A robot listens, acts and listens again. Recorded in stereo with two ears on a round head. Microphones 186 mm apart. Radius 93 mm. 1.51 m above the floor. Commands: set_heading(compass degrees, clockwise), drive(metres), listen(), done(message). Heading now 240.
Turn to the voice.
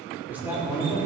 set_heading(270)
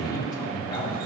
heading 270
set_heading(250)
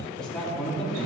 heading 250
done("Facing the man speaking, 2 to 4 m away.")